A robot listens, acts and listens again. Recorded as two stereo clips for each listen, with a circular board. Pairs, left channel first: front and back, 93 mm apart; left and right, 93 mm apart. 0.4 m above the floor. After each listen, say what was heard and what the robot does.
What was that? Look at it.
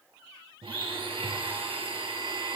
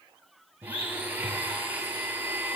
The blender: 160° right. Turn 160° right.
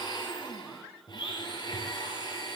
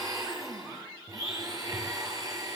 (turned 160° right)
The blender is now 40° right. Turn 40° right.
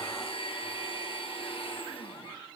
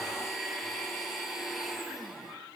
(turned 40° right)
Found it: a blender, straight ahead.